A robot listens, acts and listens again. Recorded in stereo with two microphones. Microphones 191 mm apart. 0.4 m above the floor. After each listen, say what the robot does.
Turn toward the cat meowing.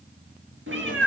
Turn 90° right.
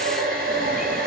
Keep listening.
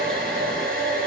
Keep listening.
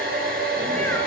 Facing where the cat meowing came from. I can't hear it now.